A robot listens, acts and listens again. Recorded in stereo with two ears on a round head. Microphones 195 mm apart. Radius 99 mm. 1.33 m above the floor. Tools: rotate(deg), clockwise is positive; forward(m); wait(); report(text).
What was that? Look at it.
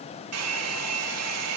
rotate(90)
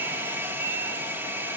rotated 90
rotate(10)
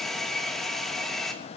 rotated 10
report("Facing the hair dryer.")